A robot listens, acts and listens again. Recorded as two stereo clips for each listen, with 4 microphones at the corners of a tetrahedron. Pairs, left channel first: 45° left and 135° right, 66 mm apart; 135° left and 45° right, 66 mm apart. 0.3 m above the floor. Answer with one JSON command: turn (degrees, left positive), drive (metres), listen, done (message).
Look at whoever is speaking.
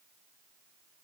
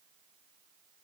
{"listen": true}
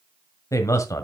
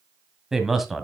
{"turn": 45}
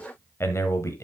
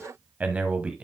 {"turn": 25}
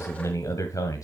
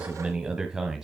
{"turn": 35}
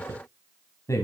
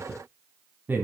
{"turn": 15}
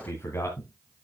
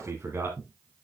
{"done": "Facing the man speaking, 2 to 4 m away."}